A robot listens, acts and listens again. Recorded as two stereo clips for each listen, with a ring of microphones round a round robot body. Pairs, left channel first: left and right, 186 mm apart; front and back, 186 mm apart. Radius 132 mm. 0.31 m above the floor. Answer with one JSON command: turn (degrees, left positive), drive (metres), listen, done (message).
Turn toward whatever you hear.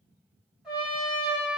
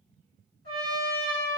{"done": "Facing the trumpet."}